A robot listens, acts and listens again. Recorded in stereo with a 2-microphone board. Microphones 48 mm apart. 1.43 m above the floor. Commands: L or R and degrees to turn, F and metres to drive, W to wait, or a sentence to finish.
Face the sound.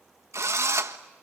R90
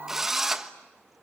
Found it: a drill, straight ahead, 1 to 2 m away.